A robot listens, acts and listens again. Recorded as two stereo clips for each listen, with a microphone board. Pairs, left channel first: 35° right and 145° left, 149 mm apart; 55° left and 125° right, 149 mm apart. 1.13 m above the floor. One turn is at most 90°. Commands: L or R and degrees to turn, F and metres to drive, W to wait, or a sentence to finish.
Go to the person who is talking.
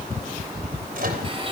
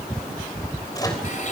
W
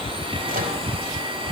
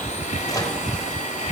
W
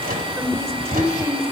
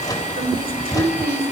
R90
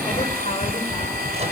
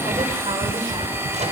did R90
R55
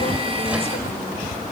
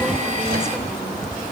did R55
W
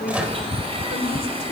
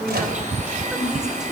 R40
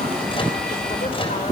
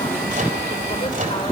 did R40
W
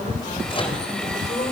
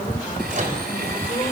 W
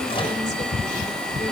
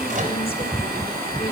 Facing where the woman speaking came from. I can't hear it now. I did not reach it.